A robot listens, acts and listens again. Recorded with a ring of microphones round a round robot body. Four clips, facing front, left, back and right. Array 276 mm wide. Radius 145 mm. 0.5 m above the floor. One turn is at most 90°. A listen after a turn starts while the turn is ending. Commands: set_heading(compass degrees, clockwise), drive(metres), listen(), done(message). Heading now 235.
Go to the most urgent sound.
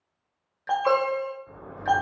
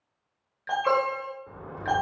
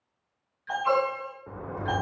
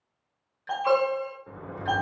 set_heading(215)
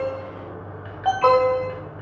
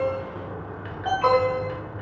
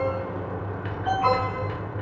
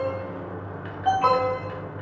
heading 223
drive(1.0)
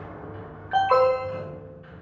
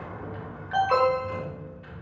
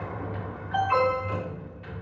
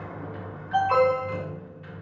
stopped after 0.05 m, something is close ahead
set_heading(213)
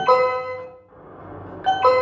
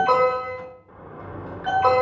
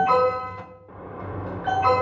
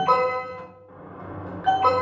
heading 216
done("Blocked. The alarm is further on, straight ahead.")